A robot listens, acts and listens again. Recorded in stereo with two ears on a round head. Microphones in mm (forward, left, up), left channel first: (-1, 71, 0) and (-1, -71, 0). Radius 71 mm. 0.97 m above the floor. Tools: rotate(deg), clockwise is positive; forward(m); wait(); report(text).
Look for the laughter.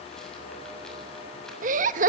rotate(55)
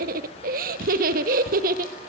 rotate(65)
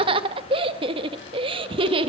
rotate(35)
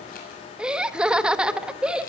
report("Facing the laughter.")